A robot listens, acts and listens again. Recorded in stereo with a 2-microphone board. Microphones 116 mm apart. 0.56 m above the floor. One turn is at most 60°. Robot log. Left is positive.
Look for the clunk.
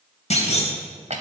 note: The clunk: about 75° left or 105° left.
cmd yaw +60
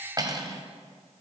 cmd idle
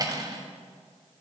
end: I heard a clunk, but can't make it out now. It was about 15° left or 45° left.